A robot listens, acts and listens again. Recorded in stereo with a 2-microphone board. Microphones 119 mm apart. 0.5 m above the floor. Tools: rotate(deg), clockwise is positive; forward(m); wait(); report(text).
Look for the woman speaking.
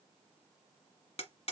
wait()
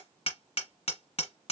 wait()
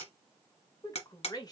rotate(-35)
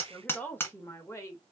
rotate(-25)
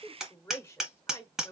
rotate(-25)
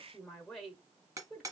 report("Facing the woman speaking.")